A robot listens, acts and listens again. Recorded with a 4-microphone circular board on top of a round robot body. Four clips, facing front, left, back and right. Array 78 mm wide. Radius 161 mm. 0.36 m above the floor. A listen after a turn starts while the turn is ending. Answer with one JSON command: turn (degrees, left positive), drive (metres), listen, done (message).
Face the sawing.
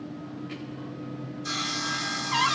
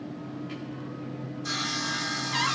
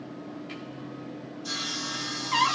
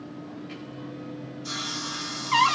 {"turn": 45}
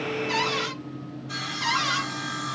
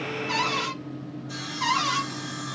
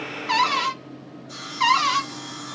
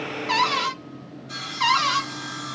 {"turn": -15}
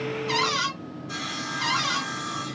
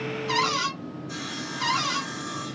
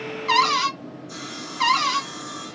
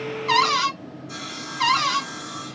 {"done": "Found it: sawing, straight ahead, 1 to 2 m away."}